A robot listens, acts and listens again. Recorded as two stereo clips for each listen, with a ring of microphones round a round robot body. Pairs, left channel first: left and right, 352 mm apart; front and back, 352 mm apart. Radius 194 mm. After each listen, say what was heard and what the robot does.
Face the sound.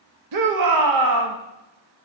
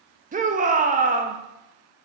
The shout: 115° right. Turn 115° right.
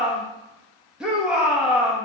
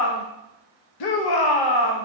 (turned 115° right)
Facing the shout, 1 to 2 m away.